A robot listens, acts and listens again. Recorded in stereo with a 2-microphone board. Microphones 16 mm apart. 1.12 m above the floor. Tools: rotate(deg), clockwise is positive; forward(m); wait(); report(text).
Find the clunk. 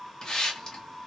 wait()
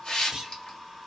rotate(35)
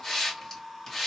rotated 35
wait()
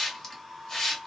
report("I heard a clunk, but can't make it out now. It was about straight ahead or 110° right.")